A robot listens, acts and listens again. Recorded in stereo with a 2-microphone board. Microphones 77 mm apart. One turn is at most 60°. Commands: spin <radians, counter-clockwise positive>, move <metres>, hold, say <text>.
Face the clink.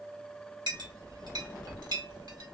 spin -1.05
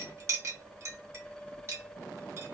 spin -0.70
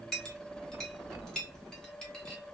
spin 0.17
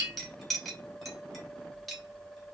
say Found it: a clink, straight ahead.